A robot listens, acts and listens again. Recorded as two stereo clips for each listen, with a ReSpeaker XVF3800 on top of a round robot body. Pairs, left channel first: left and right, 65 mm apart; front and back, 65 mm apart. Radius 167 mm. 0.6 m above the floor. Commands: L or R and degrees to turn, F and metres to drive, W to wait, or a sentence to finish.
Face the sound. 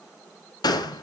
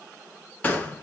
L75
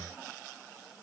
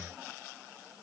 I heard a gunshot from this way, but can't make it out now.